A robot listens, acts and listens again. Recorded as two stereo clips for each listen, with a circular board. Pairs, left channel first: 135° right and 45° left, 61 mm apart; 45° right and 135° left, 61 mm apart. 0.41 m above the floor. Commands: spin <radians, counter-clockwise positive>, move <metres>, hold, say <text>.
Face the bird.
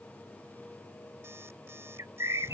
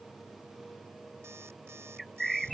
spin 0.79
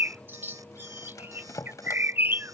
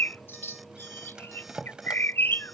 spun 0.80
say Found it: a bird, straight ahead.